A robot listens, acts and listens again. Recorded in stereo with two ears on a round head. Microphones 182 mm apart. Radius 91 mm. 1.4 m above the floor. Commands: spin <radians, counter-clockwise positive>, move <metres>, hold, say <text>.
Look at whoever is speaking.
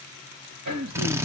spin -1.22
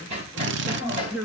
say Facing the man speaking.